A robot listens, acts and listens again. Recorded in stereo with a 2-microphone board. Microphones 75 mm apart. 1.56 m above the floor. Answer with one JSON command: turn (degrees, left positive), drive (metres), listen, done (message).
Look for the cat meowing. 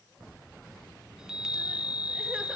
{"listen": true}
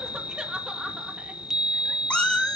{"turn": 30}
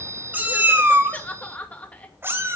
{"turn": -30}
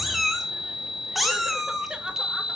{"done": "Found it: a cat meowing, straight ahead, 2 to 4 m away."}